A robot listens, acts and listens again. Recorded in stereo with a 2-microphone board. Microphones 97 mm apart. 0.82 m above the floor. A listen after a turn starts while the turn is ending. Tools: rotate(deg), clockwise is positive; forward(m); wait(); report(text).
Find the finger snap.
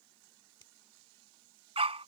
rotate(-55)
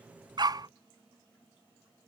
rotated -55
wait()
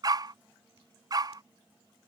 wait()
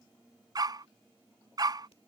report("I heard a finger snap, but can't make it out now. It was about straight ahead or 70° left.")